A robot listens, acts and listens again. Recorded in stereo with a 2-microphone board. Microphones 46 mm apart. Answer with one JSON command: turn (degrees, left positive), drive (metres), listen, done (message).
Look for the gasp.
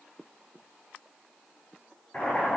{"listen": true}
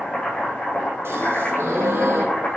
{"turn": -75}
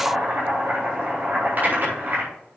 {"listen": true}
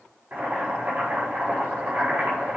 {"done": "I heard a gasp, but can't make it out now. It was about straight ahead or 30° right."}